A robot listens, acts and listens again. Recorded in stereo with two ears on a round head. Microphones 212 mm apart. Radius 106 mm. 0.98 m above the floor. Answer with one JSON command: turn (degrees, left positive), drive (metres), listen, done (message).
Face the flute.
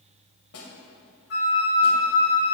{"turn": 50}
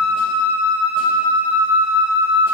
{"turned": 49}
{"turn": 80}
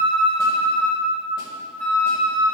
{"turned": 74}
{"done": "Facing the flute, 1 to 2 m away."}